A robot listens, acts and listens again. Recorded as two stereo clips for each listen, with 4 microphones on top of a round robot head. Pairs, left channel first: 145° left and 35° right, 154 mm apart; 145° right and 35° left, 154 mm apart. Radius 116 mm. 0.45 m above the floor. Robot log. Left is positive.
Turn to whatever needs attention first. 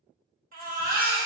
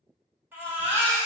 note: The baby crying: 45° right.
cmd yaw -45
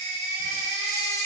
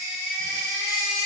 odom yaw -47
end: Found it: a baby crying, straight ahead, 1 to 2 m away.